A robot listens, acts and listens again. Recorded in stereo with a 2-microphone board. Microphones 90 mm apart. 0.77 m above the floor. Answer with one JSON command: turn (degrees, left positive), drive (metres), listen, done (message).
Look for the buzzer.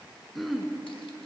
{"listen": true}
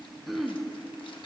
{"listen": true}
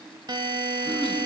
{"turn": -60}
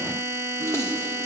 {"turn": -35}
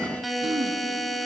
{"done": "Found it: a buzzer, straight ahead."}